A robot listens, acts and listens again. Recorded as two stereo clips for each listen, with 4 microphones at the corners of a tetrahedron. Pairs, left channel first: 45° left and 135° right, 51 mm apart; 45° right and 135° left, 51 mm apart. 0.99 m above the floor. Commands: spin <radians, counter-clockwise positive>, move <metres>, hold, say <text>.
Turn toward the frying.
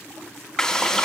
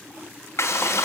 spin -0.61
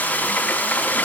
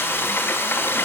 spin -0.17
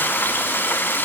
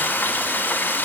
say Found it: frying, straight ahead.